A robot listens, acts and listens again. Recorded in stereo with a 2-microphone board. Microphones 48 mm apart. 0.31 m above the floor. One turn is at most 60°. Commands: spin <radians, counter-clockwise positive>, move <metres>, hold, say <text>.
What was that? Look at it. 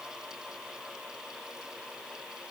hold
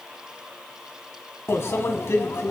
spin 1.05
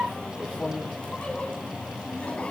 spin 0.52
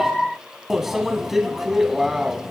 say Facing the microwave, 1 to 2 m away.